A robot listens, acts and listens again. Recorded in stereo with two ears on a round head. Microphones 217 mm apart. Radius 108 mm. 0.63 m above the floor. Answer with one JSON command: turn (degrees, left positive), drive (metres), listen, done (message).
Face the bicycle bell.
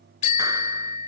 {"turn": 30}
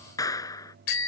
{"turn": 120}
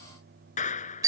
{"turn": -15}
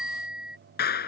{"done": "Found it: a bicycle bell, straight ahead."}